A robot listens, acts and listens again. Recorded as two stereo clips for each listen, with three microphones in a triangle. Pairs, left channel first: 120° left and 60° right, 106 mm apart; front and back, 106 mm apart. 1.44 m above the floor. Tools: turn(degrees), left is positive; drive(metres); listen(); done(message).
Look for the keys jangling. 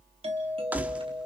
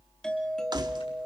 turn(degrees=-135)
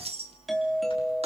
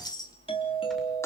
turn(degrees=-50)
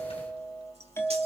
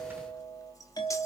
listen()
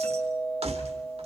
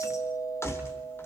turn(degrees=-65)
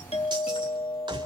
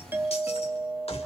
turn(degrees=-15)
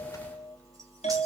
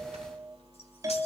listen()
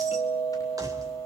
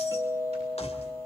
listen()
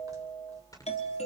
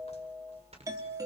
done("Facing where the keys jangling came from. I can't hear it now.")